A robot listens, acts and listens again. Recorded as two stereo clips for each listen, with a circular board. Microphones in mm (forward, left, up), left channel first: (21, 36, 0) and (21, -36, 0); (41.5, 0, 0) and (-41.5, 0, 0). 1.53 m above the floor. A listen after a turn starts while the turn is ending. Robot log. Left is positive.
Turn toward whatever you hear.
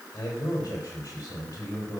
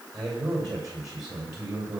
note: The man speaking: 130° left.
cmd yaw +130
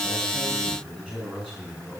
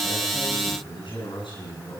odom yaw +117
end: Found it: a man speaking, straight ahead, over 4 m away.